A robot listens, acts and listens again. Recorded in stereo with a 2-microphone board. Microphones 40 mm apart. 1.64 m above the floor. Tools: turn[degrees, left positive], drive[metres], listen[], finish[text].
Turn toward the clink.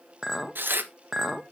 Action: turn[-30]
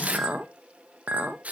Thought: So it is at 140° right.
Action: turn[-140]
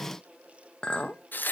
Thought: The clink is now 25° left.
Action: turn[25]
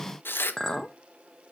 Thought: The clink is now 10° left.
Action: turn[10]
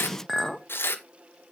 Action: finish[Found it: a clink, straight ahead.]